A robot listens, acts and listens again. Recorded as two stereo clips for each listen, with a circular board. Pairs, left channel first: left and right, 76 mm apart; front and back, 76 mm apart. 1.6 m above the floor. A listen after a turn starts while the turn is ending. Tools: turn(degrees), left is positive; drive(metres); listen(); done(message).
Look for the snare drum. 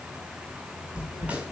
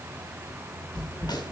turn(degrees=-20)
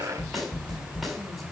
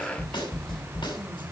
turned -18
done("Found it: a snare drum, straight ahead.")